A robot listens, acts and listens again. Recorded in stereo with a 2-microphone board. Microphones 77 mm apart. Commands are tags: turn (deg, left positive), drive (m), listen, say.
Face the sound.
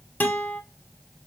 <turn deg="25"/>
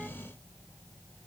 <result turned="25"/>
<listen/>
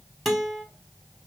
<say>Facing the guitar, under 1 m away.</say>